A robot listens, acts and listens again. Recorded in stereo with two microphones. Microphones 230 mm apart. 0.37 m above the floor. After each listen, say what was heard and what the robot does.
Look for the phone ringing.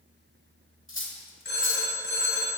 The phone ringing: about 55° left or 125° left. Turn 55° left.
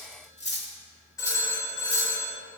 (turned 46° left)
So it is at 15° left. Turn 15° left.
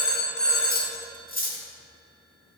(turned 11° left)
Facing the phone ringing, 1 to 2 m away.